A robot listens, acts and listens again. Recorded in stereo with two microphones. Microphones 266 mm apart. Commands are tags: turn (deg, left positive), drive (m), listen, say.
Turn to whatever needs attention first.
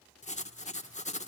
<listen/>
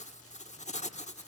<listen/>
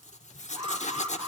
<turn deg="-20"/>
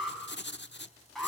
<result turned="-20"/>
<say>Found it: an alarm, straight ahead.</say>